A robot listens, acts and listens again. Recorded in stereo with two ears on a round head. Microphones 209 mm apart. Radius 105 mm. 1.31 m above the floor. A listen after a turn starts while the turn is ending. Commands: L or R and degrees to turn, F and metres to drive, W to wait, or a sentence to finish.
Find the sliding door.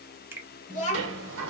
R60
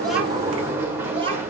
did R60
R10
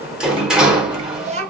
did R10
Found it: a sliding door, straight ahead.